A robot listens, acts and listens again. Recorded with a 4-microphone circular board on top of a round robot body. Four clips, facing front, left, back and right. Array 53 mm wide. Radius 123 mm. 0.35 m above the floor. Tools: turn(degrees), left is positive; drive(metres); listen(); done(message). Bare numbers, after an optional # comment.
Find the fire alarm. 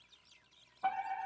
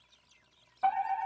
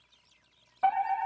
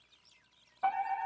# The fire alarm: 170° left.
turn(170)
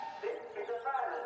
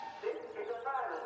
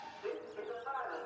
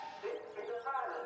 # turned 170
# The fire alarm is now 10° left.
turn(10)
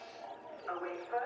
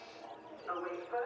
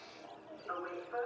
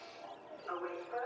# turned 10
done("Facing the fire alarm, over 4 m away.")